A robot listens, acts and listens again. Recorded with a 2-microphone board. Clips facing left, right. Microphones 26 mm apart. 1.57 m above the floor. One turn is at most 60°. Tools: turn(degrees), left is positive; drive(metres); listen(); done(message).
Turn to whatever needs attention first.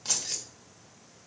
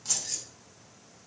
listen()
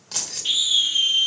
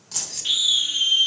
turn(degrees=-30)
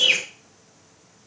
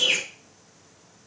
turn(degrees=20)
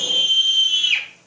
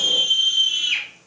done("Found it: a scream, straight ahead.")